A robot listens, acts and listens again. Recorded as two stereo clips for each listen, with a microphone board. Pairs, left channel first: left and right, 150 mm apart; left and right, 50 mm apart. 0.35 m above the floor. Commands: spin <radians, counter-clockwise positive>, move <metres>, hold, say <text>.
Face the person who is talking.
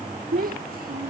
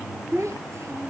spin -1.57
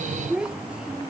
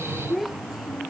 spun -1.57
say Facing the child speaking.